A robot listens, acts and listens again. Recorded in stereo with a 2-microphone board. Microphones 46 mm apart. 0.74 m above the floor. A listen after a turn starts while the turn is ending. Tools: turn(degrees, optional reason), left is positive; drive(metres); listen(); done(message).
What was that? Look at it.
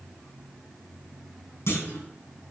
turn(degrees=65, reason="The clunk: about 65° left or 115° left.")
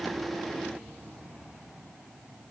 listen()
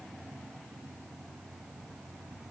done("I heard a clunk, but can't make it out now. It was about straight ahead or 50° left.")